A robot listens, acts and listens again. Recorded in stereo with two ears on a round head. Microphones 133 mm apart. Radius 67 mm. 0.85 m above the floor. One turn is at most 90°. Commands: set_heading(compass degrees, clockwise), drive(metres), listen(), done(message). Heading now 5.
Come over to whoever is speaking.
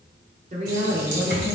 set_heading(50)
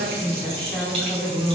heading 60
set_heading(50)
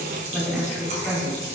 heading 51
drive(1.0)
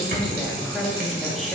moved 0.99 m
drive(1.0)
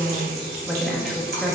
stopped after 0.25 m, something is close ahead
done("I am next to the woman speaking.")